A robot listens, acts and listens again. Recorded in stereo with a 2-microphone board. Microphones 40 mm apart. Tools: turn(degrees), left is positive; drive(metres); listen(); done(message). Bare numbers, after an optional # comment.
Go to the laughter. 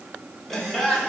turn(30)
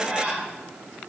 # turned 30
# So it is at 30° right.
turn(-30)
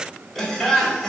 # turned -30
drive(1.0)
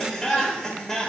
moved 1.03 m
drive(1.0)
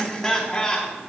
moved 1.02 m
# The laughter is now 10° left.
turn(10)
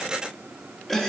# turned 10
drive(1.0)
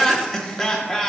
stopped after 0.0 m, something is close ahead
done("I am next to the laughter.")